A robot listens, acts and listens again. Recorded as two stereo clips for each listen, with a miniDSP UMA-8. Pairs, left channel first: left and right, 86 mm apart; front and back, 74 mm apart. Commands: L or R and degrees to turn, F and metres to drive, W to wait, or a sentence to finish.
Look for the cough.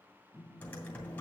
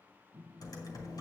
W
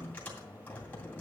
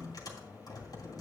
W
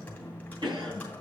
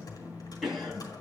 R90
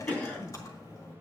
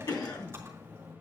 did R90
L20
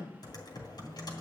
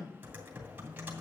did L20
Found it: a cough, straight ahead, 2 to 4 m away.